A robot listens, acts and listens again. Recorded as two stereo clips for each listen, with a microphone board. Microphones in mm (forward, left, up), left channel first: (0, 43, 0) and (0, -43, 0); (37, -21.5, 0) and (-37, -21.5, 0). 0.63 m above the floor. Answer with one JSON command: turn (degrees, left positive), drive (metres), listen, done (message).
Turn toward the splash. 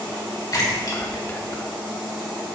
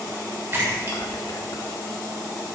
{"turn": 130}
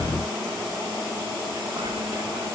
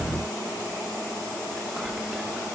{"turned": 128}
{"done": "I heard a splash from this way, but can't make it out now."}